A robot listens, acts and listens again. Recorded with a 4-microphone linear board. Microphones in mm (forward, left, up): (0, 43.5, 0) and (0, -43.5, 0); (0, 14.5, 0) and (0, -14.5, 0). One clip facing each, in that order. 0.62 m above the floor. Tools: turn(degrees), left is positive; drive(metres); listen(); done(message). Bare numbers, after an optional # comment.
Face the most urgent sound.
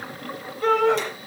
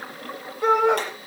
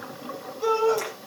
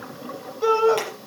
# The shout: about 15° right or 165° right.
turn(-15)
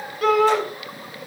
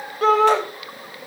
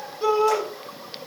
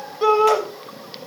# So it is at 150° right.
turn(-150)
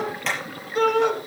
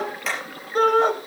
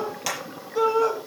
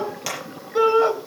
# The shout is now 45° right.
turn(-45)
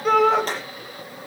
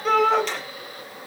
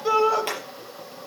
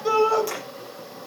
done("Facing the shout.")